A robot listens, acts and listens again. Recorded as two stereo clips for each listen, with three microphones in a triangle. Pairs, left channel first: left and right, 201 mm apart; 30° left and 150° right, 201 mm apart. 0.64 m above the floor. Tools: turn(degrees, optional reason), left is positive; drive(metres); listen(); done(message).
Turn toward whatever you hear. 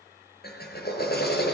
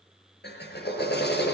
turn(degrees=60, reason="The drill: 60° left.")
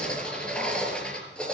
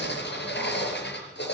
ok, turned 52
done("Found it: a drill, straight ahead, over 4 m away.")